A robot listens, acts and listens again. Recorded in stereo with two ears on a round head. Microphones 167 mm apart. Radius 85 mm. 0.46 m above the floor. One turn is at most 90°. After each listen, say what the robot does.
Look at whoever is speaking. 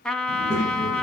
Turn 40° left.
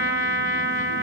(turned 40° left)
Keep listening.
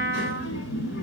Turn 90° left.
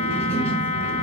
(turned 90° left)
Turn 10° left.
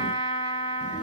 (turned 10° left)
Facing the child speaking.